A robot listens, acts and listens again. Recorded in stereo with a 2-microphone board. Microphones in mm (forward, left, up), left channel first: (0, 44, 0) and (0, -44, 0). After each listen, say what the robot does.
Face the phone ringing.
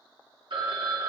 Turn 60° right.
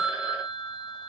Turn 15° right.
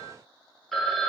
Found it: a phone ringing, straight ahead.